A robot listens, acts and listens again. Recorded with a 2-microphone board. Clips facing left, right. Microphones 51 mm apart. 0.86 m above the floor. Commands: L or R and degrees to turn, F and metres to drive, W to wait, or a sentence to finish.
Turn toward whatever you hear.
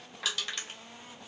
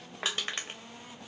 R35
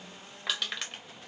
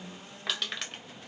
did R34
Facing the crushing, under 1 m away.